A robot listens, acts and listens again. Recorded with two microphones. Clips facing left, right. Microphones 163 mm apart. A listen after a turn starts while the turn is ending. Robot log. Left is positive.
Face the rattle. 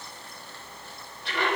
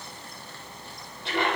cmd idle
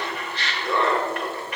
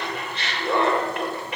cmd idle
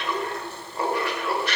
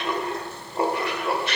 end: I can't make out a rattle to turn to.